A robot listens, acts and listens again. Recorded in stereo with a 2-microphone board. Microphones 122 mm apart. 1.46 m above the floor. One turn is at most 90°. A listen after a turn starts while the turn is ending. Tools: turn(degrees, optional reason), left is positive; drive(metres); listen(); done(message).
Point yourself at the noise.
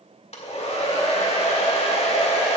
turn(degrees=55, reason="The hair dryer: about 55° left or 125° left.")
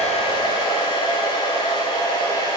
turn(degrees=50, reason="So it is at 50° left.")
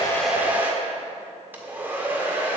turn(degrees=-20, reason="The hair dryer is now 20° right.")
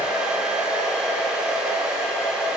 turn(degrees=-10, reason="The hair dryer is now 10° right.")
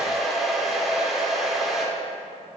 done("Facing the hair dryer, 1 to 2 m away.")